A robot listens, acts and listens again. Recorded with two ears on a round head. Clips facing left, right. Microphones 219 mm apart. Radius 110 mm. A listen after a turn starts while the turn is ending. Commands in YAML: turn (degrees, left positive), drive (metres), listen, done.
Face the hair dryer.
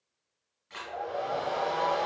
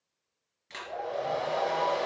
turn: -50
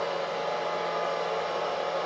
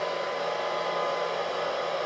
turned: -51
turn: -80
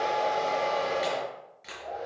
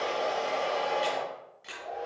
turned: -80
done: "Found it: a hair dryer, straight ahead, 2 to 4 m away."